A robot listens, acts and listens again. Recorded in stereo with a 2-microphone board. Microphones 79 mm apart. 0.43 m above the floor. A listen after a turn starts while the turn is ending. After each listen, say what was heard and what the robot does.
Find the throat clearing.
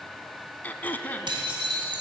The throat clearing: about 25° left or 155° left. Turn 25° left.
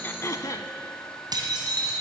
So it is at 130° left. Turn 130° left.
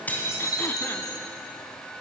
Keep listening.
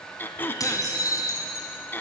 The throat clearing is now 25° left. Turn 25° left.
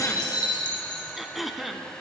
Found it: throat clearing, straight ahead, under 1 m away.